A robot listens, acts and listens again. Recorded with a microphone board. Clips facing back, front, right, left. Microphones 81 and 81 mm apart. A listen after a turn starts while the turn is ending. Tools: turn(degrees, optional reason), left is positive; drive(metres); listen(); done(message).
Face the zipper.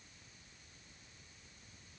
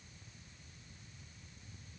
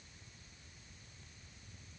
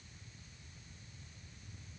listen()
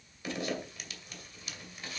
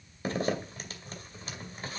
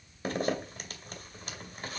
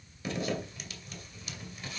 turn(degrees=-50, reason="The zipper: 50° right.")
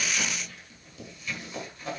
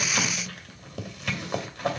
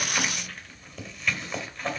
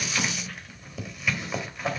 done("Facing the zipper, 2 to 4 m away.")